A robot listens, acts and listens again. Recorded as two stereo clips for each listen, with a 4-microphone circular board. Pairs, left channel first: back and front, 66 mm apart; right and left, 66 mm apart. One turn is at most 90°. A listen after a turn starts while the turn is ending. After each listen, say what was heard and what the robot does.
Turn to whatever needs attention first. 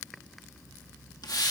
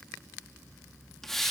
Keep listening.
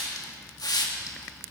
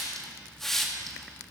Keep listening.
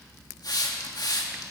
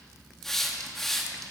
I can't make out anything urgent to turn to.